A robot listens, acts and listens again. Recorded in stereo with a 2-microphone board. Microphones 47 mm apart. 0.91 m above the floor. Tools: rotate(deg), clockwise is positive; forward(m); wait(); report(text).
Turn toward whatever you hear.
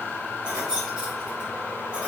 rotate(25)
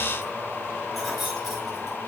report("Facing the keys jangling, over 4 m away.")